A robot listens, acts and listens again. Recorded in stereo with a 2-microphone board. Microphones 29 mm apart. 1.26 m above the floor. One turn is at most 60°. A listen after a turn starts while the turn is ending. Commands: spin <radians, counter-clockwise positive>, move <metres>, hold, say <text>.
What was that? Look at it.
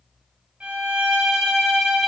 spin -0.87
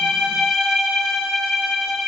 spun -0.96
spin -0.17
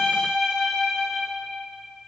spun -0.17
say Facing the violin, 1 to 2 m away.